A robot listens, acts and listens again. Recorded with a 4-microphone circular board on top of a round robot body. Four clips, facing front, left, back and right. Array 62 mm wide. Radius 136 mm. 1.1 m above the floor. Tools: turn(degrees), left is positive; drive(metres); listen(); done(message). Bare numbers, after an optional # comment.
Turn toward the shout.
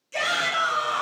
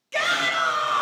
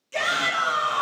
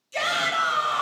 # The shout: 90° left.
turn(90)
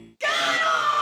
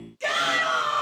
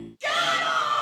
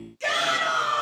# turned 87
done("Found it: a shout, straight ahead, 2 to 4 m away.")